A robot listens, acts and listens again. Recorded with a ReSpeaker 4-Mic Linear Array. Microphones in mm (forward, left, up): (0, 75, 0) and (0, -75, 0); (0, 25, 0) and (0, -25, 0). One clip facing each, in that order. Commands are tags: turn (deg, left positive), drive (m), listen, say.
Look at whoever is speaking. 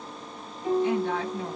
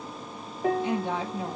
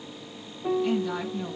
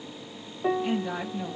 <turn deg="-15"/>
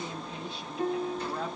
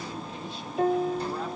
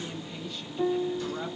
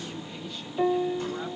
<listen/>
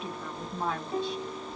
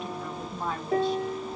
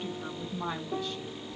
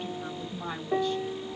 <say>Found it: a woman speaking, straight ahead.</say>